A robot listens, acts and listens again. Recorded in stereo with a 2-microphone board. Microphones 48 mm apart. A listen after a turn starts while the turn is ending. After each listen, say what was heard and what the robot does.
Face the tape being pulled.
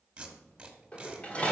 The tape being pulled: about 25° right or 155° right. Turn 25° right.
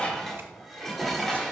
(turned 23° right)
Keep listening.
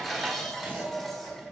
Keep listening.
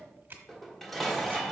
So it is at 130° right. Turn 130° right.
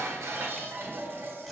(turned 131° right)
Keep listening.
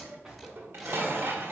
Keep listening.
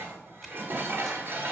I heard tape being pulled from this way, but can't make it out now.